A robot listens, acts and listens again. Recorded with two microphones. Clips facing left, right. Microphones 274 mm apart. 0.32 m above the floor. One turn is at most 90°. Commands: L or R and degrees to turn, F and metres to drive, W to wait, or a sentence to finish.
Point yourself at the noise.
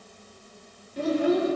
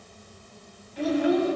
L45
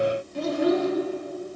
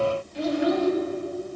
L75
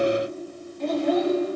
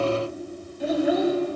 R10
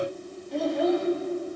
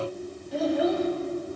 Facing the child speaking, under 1 m away.